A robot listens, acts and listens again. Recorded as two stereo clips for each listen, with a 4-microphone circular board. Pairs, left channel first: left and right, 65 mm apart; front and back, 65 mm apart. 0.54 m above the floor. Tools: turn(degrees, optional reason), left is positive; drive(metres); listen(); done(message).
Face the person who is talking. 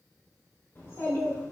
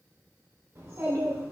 turn(degrees=135, reason="The child speaking: 135° left.")
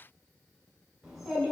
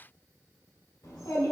turn(degrees=-10, reason="The child speaking is now 10° right.")
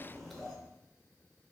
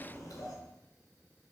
done("Facing the child speaking, 1 to 2 m away.")